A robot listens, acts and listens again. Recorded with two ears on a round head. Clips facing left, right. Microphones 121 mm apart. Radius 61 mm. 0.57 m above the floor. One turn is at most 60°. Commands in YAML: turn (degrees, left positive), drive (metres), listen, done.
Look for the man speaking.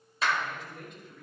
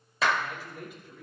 turn: -30
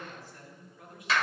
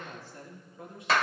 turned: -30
turn: -60
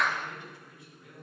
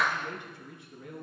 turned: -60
turn: -60
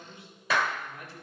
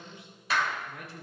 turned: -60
turn: -55
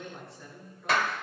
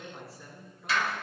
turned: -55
done: "Found it: a man speaking, straight ahead, over 4 m away."